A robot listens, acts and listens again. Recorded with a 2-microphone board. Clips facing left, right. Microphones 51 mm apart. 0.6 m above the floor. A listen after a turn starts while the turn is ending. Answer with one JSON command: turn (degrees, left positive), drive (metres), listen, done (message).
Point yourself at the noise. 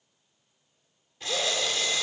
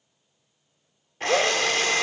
{"turn": -50}
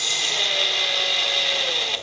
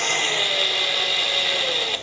{"done": "Facing the drill."}